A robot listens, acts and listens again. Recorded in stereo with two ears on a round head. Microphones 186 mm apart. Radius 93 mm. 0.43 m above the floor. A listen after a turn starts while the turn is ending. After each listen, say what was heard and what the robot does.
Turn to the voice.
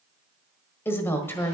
Turn 30° left.
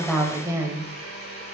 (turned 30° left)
So it is at 15° right. Turn 15° right.
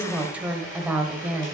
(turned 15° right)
Facing the woman speaking.